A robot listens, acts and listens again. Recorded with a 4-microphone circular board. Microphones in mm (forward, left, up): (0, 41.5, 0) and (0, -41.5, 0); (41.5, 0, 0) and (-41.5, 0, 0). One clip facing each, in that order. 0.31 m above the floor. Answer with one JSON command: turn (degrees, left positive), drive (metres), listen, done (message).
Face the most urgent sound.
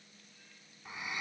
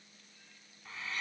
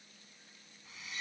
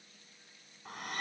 {"listen": true}
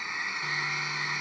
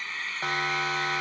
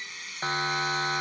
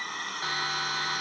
{"turn": -65}
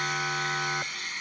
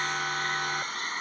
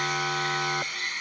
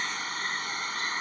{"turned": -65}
{"done": "Found it: a siren, straight ahead."}